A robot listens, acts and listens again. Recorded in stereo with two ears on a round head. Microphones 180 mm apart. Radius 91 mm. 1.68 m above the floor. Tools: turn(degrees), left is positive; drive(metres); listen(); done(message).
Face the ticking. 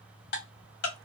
turn(degrees=55)
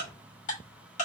turn(degrees=45)
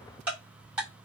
done("Facing the ticking, 1 to 2 m away.")